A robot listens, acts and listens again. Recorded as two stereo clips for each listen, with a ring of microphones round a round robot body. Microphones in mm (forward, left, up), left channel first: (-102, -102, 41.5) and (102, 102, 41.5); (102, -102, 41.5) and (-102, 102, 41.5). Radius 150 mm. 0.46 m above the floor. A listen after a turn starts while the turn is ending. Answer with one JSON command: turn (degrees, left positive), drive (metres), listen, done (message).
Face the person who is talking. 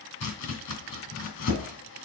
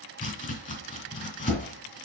{"listen": true}
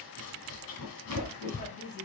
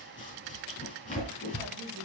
{"listen": true}
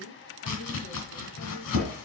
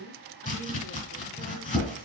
{"turn": -70}
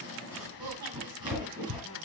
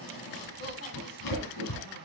{"listen": true}
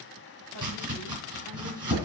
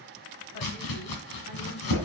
{"listen": true}
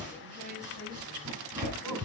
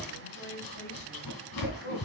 {"done": "Facing where the woman speaking came from. I can't hear it now."}